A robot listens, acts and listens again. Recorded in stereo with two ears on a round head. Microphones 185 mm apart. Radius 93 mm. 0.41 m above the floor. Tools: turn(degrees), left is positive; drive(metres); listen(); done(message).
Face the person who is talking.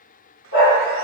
listen()
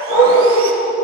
listen()
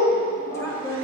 turn(degrees=30)
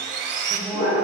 listen()
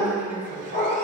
turn(degrees=-10)
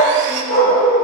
listen()
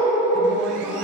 listen()
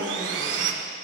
done("Facing where the woman speaking came from. I can't hear it now.")